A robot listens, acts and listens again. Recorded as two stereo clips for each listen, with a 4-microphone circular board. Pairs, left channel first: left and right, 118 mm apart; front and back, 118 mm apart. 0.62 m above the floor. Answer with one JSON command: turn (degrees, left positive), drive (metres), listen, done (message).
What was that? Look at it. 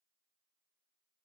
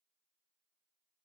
{"listen": true}
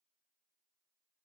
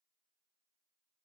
{"listen": true}
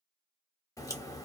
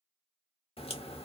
{"turn": 30}
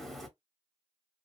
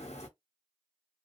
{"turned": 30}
{"done": "Found it: a crack, straight ahead."}